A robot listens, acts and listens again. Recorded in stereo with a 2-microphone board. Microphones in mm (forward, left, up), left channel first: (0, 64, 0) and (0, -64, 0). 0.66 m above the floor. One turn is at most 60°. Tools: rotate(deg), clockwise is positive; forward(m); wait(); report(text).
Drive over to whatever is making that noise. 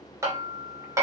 rotate(20)
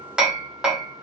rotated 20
forward(1.0)
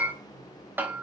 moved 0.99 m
rotate(15)
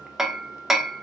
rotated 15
forward(1.0)
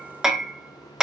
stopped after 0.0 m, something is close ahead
report("Arrived at the hammering, straight ahead.")